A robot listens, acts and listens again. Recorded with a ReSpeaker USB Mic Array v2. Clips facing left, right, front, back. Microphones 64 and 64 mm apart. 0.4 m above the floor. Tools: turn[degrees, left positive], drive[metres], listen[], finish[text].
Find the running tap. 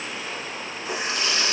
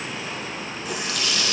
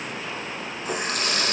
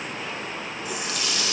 Thought: The running tap: 35° left.
Action: turn[35]
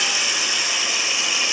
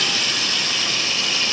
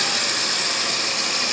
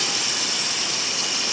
Thought: The running tap is now 15° left.
Action: turn[15]
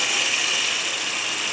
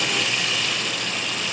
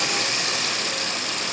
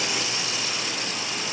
Action: finish[Found it: a running tap, straight ahead.]